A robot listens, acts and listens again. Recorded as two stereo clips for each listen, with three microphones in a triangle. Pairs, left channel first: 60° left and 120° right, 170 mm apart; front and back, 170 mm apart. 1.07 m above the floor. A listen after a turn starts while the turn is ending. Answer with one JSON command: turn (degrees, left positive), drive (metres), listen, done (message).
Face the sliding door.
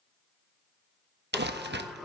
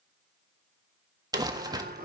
{"turn": 150}
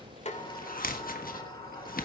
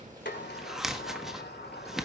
{"done": "Found it: a sliding door, straight ahead, 2 to 4 m away."}